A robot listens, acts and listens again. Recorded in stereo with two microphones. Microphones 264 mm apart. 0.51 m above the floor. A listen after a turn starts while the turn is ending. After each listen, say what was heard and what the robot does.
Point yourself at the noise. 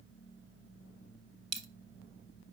The dropped coin: about 65° right or 115° right. Turn 65° right.
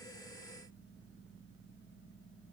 Keep listening.
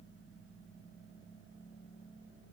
I heard a dropped coin, but can't make it out now. It was about straight ahead or 50° right.